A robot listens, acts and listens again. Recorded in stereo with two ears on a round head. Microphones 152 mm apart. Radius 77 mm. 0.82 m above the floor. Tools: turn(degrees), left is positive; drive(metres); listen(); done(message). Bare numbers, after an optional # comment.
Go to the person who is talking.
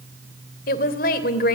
# The woman speaking: about 55° left or 125° left.
turn(55)
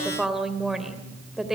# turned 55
drive(1.0)
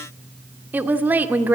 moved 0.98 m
# The woman speaking is now 10° right.
turn(-10)
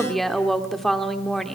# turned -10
drive(1.0)
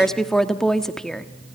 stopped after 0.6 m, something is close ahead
done("I am next to the woman speaking.")